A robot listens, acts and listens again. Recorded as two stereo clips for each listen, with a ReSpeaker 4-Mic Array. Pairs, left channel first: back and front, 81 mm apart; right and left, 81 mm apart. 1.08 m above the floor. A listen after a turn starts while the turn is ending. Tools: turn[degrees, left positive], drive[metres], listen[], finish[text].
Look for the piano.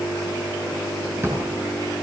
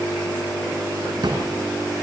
Action: listen[]
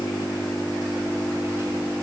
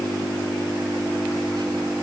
Action: listen[]
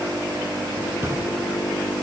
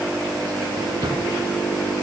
Action: finish[I can't make out a piano, only a drawer.]